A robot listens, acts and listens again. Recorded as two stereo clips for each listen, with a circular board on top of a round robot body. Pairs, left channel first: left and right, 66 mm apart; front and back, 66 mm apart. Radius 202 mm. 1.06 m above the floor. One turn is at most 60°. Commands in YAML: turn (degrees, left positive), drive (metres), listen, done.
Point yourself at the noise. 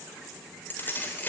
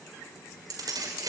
turn: 60
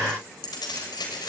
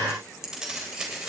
turn: 60
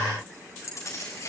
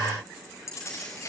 turn: 50
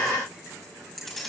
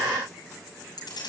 done: "Found it: keys jangling, straight ahead, over 4 m away."